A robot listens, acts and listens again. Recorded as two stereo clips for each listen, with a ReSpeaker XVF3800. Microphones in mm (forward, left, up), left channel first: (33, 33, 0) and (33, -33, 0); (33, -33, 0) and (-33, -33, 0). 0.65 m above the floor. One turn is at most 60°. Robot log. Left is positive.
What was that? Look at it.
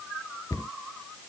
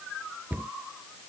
note: The cupboard door: 120° left.
cmd yaw +60
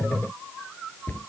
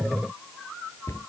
note: The cupboard door is now 35° left.
cmd yaw +35
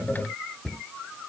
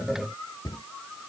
note: The cupboard door is now 10° left.
cmd yaw +10
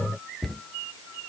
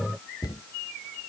end: Found it: a cupboard door, straight ahead.